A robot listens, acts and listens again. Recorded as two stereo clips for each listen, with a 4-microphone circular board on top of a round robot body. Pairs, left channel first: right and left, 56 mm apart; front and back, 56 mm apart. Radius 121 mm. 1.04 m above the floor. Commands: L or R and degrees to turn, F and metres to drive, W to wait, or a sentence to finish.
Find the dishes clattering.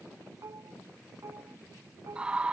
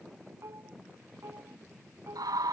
L135
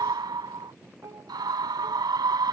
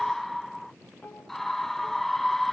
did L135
L55
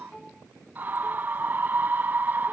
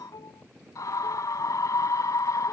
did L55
Facing the dishes clattering.